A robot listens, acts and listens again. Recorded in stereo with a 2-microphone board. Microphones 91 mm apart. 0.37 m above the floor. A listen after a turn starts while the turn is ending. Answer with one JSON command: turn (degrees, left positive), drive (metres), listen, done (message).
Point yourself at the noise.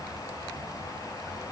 {"listen": true}
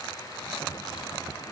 {"listen": true}
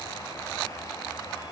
{"done": "I can't make out anything to turn to."}